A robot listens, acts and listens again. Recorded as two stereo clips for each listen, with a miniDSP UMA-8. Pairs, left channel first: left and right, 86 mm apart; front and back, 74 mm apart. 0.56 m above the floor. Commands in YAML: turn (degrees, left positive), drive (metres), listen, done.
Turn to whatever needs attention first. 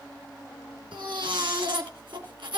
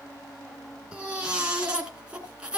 turn: -105
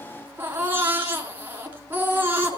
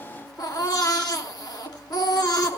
turn: -25
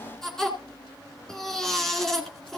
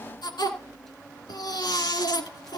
done: "Found it: a baby crying, straight ahead, 2 to 4 m away."